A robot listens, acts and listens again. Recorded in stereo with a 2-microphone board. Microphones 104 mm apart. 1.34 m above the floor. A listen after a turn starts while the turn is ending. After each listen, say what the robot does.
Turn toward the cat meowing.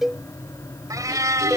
Turn 30° right.
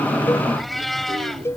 Facing the cat meowing.